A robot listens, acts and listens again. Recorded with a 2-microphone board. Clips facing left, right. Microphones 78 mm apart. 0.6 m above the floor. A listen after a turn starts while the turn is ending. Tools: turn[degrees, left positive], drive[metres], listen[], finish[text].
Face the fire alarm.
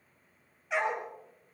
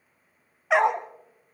Action: listen[]
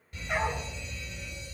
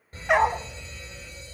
Thought: The fire alarm: about 35° right or 145° right.
Action: turn[-35]
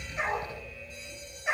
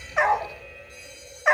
Thought: So it is at 105° right.
Action: turn[-105]
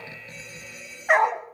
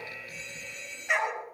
Thought: The fire alarm is now 10° left.
Action: turn[10]
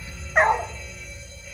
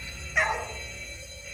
Action: finish[Found it: a fire alarm, straight ahead.]